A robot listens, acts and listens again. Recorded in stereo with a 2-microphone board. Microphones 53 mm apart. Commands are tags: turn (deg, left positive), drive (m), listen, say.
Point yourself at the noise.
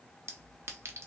<turn deg="-55"/>
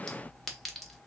<say>Found it: a clink, straight ahead.</say>